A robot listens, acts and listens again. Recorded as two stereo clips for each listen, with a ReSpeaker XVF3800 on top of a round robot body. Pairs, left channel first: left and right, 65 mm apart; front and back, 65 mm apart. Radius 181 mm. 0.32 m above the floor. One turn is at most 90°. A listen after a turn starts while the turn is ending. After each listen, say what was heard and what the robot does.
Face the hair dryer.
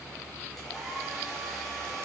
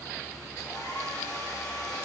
Facing the hair dryer, over 4 m away.